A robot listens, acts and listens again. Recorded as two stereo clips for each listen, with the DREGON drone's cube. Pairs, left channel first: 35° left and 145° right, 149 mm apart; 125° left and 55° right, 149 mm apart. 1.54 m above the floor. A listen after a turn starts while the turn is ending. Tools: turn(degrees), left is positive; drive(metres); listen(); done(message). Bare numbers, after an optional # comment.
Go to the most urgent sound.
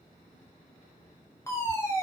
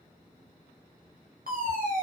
# The fire alarm: 40° right.
turn(-40)
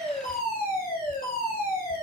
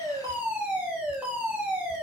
# The fire alarm is now 25° left.
turn(25)
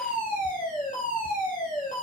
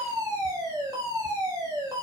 # The fire alarm is now 10° left.
turn(10)
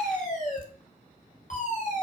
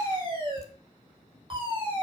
drive(1.0)
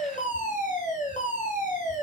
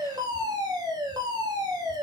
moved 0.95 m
drive(1.0)
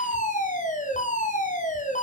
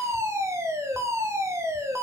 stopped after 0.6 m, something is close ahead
# The fire alarm is now 15° left.
turn(15)
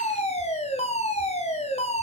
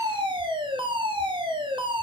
done("Arrived at the fire alarm, straight ahead.")